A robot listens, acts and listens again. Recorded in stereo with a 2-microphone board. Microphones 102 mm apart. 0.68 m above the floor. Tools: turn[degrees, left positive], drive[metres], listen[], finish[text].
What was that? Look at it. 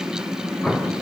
Action: turn[30]
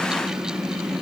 Action: listen[]
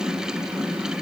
Action: finish[I heard an explosion, but can't make it out now. It was about 20° right or 140° left.]